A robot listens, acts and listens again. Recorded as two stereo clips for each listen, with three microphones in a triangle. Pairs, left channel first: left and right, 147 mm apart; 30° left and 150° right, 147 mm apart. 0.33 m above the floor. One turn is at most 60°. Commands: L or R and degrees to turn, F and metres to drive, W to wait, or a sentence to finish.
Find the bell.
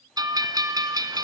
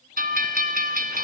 R60
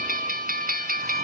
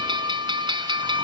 R60
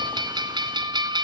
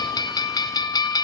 R30
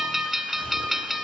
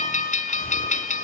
Found it: a bell, straight ahead.